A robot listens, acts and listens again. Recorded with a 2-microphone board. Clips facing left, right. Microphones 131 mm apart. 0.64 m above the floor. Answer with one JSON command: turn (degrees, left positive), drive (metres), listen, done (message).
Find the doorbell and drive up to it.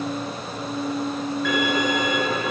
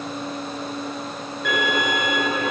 {"listen": true}
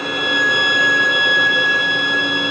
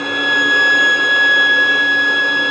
{"listen": true}
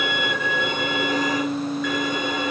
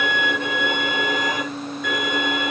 {"done": "I can't make out a doorbell, only a violin."}